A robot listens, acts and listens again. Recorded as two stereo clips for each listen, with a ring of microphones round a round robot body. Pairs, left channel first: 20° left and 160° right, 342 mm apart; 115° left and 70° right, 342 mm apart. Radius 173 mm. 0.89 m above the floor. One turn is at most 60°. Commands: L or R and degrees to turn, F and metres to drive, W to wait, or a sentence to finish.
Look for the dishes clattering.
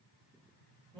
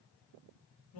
W
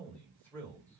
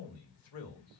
W
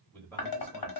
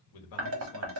R15
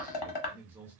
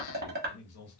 Found it: dishes clattering, straight ahead.